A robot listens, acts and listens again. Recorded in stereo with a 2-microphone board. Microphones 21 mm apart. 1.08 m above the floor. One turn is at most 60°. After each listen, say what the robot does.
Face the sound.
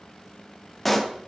Turn 30° left.
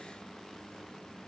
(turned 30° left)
Keep listening.
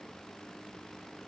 I heard a pop, but can't make it out now. It was about 25° right or 145° left.